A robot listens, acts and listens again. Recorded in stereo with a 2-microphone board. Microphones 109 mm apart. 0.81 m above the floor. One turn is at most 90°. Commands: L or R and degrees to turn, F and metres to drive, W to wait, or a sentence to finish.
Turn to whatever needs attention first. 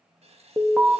L30
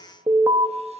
R30
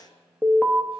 L15
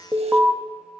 Facing the alarm, under 1 m away.